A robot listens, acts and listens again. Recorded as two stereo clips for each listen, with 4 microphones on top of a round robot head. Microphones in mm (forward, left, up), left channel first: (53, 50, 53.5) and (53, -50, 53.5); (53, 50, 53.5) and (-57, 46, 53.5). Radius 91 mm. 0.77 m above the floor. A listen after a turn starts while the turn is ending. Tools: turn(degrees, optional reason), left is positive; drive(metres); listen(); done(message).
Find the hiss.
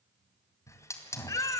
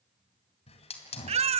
turn(degrees=30, reason="The hiss: 30° left.")
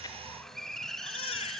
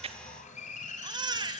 done("Found it: a hiss, straight ahead.")